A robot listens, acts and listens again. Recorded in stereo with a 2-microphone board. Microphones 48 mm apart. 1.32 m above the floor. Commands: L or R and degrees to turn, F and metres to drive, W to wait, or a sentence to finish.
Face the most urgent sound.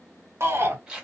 R60
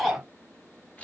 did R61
Found it: a shout, straight ahead, 1 to 2 m away.